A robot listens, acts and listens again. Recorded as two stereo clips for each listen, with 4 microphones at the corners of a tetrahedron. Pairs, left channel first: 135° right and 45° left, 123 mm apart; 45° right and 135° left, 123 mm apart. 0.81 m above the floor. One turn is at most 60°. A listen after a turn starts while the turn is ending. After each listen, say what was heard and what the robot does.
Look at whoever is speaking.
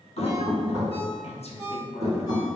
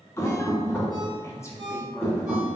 The woman speaking: 110° right. Turn 60° right.
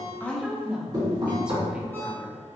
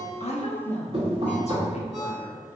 The woman speaking is now 35° right. Turn 35° right.
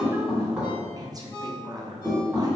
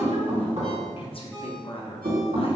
The woman speaking is now 10° right. Turn 10° right.
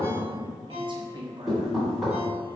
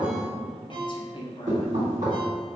Found it: a woman speaking, straight ahead.